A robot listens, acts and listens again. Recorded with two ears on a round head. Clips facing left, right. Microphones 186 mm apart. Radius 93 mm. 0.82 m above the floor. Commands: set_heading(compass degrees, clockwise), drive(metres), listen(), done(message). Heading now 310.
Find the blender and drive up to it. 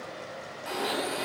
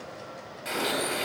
set_heading(340)
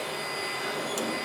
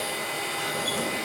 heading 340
set_heading(100)
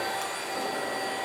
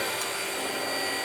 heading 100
set_heading(140)
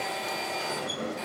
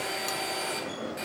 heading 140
set_heading(155)
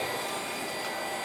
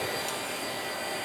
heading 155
drive(1.0)
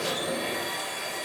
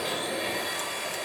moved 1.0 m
drive(1.0)
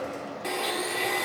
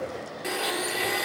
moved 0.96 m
drive(1.0)
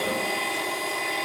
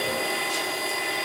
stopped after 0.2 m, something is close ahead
done("Arrived at the blender, straight ahead.")